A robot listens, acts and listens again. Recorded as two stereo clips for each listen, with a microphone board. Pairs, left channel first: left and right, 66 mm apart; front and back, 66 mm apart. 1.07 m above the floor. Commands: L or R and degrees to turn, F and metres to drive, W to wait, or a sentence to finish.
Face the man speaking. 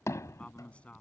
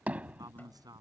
L165
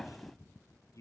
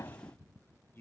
L55
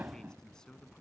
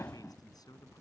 L10
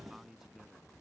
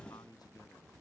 Facing the man speaking.